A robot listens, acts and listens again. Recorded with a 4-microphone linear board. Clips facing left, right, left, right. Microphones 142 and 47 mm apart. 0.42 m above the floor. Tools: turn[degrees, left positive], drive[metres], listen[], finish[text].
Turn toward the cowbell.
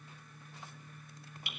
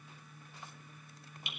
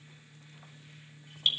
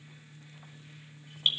Action: listen[]
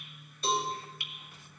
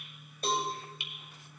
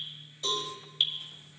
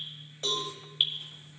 Thought: The cowbell: about 50° right or 130° right.
Action: turn[-50]
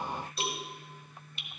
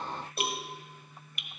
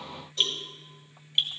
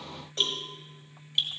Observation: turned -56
Thought: So it is at 65° right.
Action: turn[-65]
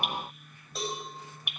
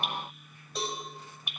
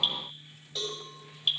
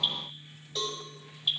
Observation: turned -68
Action: finish[Facing the cowbell, 2 to 4 m away.]